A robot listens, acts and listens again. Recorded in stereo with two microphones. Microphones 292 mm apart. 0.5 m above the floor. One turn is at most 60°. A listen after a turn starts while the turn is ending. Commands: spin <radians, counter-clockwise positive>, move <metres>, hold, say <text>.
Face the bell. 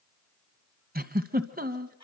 hold
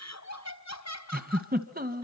hold
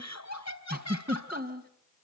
say I can't make out a bell to turn to.